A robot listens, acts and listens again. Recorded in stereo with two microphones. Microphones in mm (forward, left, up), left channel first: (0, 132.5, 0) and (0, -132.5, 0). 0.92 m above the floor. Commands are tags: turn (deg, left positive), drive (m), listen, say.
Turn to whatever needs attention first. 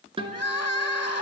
<turn deg="75"/>
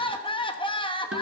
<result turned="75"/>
<turn deg="20"/>
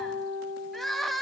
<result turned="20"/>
<say>Found it: crying, straight ahead.</say>